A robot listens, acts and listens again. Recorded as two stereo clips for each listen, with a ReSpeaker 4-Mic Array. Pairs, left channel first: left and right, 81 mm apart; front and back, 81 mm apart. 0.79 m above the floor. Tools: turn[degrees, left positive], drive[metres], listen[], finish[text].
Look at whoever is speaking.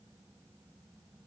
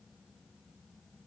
Action: listen[]
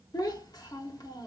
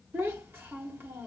Thought: The child speaking: 120° left.
Action: turn[120]
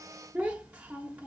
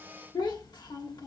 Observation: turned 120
Thought: The child speaking is now 20° right.
Action: turn[-20]
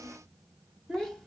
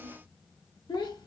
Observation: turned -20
Action: finish[Found it: a child speaking, straight ahead.]